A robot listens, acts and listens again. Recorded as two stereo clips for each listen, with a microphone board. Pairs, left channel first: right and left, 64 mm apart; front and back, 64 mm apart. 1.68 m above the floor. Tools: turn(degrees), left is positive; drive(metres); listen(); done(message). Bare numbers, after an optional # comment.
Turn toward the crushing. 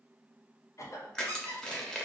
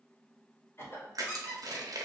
# The crushing: 170° right.
turn(-170)
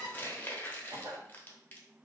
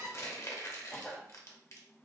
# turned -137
# The crushing is now 35° right.
turn(-35)
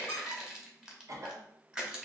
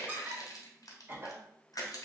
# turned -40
# The crushing is now 10° left.
turn(10)
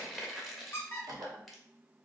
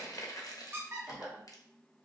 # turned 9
done("Facing the crushing.")